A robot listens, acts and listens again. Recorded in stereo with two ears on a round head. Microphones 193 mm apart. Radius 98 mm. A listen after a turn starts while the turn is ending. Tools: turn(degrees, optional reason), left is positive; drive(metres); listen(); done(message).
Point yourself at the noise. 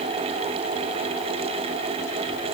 listen()
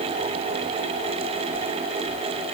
listen()
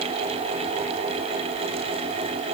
done("I can't make out anything.")